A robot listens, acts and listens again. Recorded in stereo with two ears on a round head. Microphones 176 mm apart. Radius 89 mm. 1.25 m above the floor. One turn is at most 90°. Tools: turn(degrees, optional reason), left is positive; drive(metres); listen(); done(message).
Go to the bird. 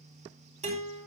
listen()
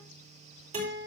listen()
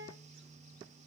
done("I can't make out a bird to turn to.")